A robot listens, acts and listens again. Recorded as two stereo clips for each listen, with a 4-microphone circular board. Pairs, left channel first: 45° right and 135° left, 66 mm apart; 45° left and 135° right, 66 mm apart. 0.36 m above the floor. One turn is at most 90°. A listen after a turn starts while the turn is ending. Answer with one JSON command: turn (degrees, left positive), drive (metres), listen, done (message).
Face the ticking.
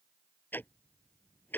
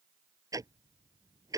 {"turn": -90}
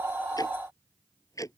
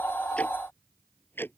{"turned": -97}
{"turn": -10}
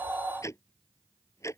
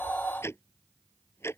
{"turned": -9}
{"done": "Found it: ticking, straight ahead."}